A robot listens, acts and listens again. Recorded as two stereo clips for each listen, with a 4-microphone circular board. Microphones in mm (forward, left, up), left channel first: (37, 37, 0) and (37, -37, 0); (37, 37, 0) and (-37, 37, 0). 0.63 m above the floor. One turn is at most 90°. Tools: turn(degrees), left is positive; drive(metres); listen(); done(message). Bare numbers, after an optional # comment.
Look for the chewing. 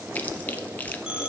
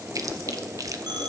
# The chewing: 155° left.
turn(90)
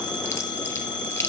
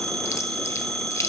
# The chewing is now 45° left.
turn(45)
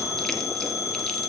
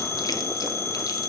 listen()
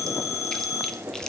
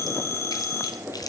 # The chewing is now 10° left.
turn(10)
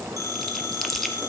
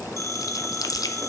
done("Found it: chewing, straight ahead.")